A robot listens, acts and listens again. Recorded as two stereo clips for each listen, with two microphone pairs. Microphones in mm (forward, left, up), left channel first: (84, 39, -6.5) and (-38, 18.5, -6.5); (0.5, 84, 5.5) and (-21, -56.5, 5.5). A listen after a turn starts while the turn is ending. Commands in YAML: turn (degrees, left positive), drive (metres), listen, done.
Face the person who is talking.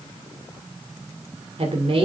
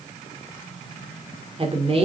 turn: -135
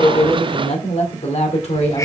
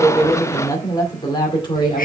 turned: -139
turn: 35
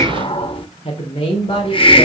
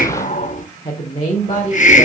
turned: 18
turn: 35
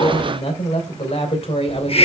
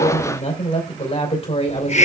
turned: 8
turn: 35
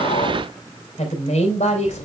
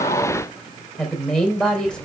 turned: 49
turn: -10
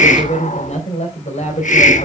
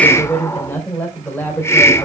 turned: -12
done: "Found it: a woman speaking, straight ahead, 2 to 4 m away."